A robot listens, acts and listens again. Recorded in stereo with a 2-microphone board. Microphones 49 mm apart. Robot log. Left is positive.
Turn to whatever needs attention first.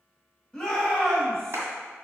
cmd yaw +30
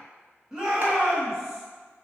note: So it is at 15° right.
cmd yaw -15
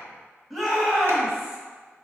end: Facing the shout.